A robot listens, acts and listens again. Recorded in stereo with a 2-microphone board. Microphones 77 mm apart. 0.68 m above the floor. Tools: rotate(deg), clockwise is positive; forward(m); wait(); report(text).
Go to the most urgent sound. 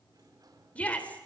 rotate(-15)
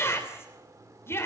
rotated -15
rotate(-150)
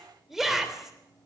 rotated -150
forward(1.0)
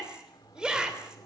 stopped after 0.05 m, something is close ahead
rotate(10)
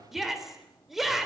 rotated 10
report("Something is in my way. I am facing the shout but have not reached it.")